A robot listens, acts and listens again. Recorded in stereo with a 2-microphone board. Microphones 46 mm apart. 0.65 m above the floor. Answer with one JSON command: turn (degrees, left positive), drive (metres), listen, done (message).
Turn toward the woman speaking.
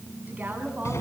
{"turn": -35}
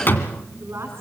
{"turn": -110}
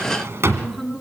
{"done": "Facing the woman speaking, over 4 m away."}